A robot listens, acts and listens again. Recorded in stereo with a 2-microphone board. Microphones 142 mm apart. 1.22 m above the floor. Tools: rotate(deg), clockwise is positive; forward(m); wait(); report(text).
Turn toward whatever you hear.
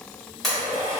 rotate(-30)
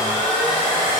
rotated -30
rotate(-150)
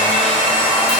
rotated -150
rotate(10)
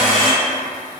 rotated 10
report("Facing the blender, 1 to 2 m away.")